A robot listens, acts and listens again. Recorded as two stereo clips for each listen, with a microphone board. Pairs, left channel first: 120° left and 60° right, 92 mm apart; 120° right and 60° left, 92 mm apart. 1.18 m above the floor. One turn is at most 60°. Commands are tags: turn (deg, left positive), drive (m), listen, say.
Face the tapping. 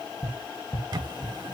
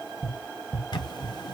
<turn deg="60"/>
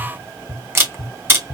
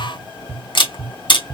<turn deg="60"/>
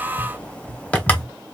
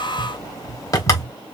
<turn deg="20"/>
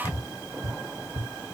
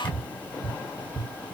<say>Found it: tapping, straight ahead, 1 to 2 m away.</say>